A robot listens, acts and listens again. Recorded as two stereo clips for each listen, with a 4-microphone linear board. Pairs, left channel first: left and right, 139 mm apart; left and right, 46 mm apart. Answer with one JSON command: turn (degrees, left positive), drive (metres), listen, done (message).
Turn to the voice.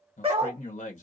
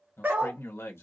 {"turn": 65}
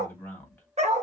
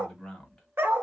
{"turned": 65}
{"turn": 15}
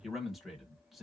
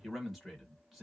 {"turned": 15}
{"done": "Found it: a man speaking, straight ahead."}